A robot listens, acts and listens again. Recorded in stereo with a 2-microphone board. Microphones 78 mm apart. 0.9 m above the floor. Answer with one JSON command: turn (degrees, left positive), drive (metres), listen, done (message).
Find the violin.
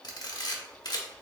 {"listen": true}
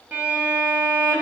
{"turn": -25}
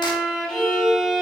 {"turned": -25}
{"done": "Facing the violin, under 1 m away."}